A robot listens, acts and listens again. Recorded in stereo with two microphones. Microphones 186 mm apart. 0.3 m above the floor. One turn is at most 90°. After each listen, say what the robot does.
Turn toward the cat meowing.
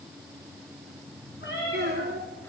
Turn 90° left.
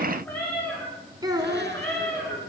Facing the cat meowing, over 4 m away.